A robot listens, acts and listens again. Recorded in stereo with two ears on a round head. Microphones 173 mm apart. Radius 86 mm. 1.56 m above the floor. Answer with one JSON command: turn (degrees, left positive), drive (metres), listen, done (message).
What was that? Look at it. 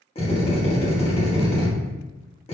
{"turn": 30}
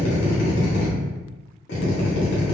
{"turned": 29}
{"turn": 120}
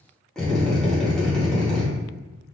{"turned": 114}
{"done": "Found it: a drill, straight ahead."}